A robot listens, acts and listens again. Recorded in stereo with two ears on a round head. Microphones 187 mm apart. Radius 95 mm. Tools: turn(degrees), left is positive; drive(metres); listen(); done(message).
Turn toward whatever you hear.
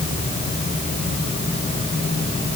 listen()
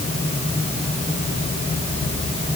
listen()
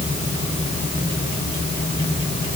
done("I can't make out anything to turn to.")